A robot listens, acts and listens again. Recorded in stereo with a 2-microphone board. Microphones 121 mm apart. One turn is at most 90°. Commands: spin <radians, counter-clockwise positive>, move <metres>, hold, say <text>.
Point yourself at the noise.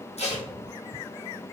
spin 1.05
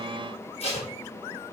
spin 1.05
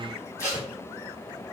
spin 0.44
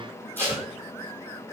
spin 0.26
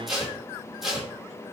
say Facing the tape being pulled.